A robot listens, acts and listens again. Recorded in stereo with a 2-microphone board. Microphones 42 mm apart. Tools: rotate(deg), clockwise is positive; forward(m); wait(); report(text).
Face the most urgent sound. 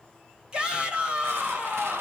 rotate(25)
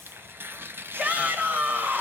rotate(130)
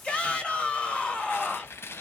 rotate(-35)
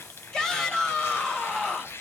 rotate(-20)
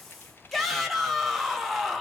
report("Found it: a shout, straight ahead, 1 to 2 m away.")